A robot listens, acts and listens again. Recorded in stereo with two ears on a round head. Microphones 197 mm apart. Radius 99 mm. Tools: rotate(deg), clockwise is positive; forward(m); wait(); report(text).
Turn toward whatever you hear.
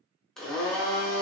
rotate(-30)
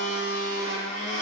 rotate(-145)
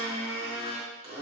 rotate(25)
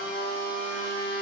rotate(10)
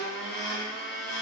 report("Facing the blender, under 1 m away.")